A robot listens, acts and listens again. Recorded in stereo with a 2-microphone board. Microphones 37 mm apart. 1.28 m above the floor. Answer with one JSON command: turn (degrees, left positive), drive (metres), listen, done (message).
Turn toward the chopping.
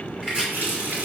{"turn": -25}
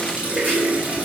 {"listen": true}
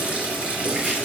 {"listen": true}
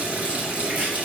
{"done": "I heard chopping, but can't make it out now. It was about straight ahead or 130° right."}